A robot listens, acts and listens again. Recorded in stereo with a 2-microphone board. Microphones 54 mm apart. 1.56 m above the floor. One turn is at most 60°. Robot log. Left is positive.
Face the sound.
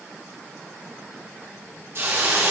note: The hiss: about 50° right or 130° right.
cmd yaw -50
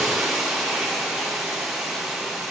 end: Found it: a hiss, straight ahead, 1 to 2 m away.